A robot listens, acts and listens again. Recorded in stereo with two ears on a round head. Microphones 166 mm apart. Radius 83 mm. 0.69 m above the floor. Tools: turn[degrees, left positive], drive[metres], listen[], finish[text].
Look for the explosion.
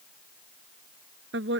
Action: listen[]
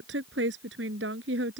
Action: listen[]
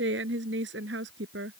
Action: finish[I can't make out an explosion, only a woman speaking.]